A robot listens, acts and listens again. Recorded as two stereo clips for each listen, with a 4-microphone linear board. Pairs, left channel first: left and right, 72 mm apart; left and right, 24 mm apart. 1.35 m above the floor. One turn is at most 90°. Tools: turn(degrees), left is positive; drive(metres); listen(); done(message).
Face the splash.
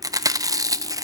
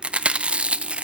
listen()
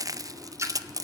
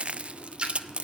turn(degrees=-45)
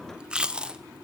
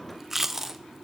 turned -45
listen()
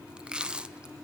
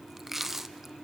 done("I heard a splash, but can't make it out now. It was about straight ahead or 90° right.")